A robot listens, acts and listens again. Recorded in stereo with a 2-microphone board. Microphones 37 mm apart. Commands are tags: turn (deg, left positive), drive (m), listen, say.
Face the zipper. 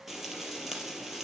<listen/>
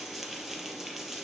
<listen/>
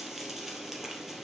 <say>I can't make out a zipper, only frying.</say>